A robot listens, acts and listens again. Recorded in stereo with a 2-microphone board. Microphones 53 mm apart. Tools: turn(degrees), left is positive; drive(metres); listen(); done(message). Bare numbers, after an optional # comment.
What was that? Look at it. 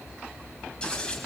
# The scissors: about 20° left or 160° left.
turn(20)
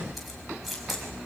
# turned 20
done("Facing the scissors.")